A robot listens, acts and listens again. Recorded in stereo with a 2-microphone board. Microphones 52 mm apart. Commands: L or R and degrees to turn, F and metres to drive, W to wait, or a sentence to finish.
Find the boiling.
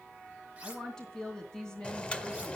L20
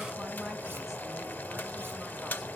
L135
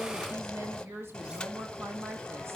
L15
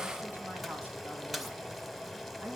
Facing the boiling, under 1 m away.